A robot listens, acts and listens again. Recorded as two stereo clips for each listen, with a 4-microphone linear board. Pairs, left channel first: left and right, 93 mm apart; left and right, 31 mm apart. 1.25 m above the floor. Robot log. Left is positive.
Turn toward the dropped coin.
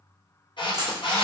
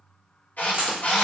note: The dropped coin: about 40° right or 140° right.
cmd yaw -40
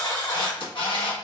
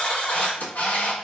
cmd idle
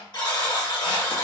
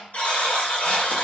end: I heard a dropped coin, but can't make it out now. It was about straight ahead or 100° right.